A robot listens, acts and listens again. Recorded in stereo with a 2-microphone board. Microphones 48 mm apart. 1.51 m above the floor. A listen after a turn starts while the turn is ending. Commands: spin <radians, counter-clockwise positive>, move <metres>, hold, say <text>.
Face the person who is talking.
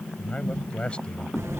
spin 0.35
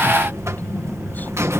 hold
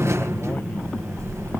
hold
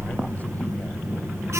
say I heard a man speaking, but can't make it out now. It was about straight ahead or 140° left.